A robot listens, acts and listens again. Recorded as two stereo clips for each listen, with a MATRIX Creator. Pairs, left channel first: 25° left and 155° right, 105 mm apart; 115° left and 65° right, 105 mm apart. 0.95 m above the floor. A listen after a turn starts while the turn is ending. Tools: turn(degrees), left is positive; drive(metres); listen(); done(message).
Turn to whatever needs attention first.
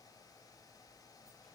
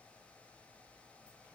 listen()
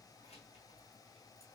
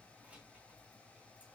listen()
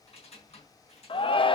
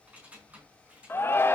turn(degrees=45)
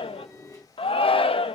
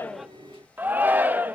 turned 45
done("Found it: a shout, straight ahead.")